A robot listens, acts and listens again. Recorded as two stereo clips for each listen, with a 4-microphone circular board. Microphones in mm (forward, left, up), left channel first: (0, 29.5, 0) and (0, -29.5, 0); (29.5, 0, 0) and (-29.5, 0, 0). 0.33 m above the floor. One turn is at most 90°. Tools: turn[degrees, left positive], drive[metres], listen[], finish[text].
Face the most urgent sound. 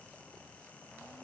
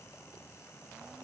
Action: listen[]
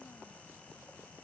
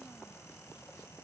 Action: listen[]
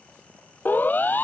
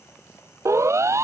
Thought: The siren: 150° left.
Action: turn[90]
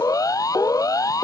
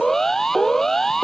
Thought: The siren is now 85° left.
Action: turn[85]
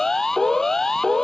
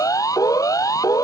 Action: finish[Found it: a siren, straight ahead.]